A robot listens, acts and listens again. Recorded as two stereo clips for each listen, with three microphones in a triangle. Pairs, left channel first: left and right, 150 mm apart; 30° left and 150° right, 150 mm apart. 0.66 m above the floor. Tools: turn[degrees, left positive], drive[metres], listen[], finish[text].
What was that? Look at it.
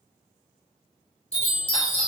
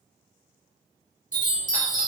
Thought: The chime: 45° left.
Action: turn[45]
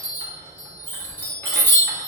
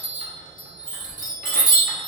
Thought: The chime is now 20° left.
Action: turn[20]
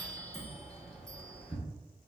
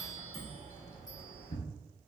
Action: finish[Facing the chime.]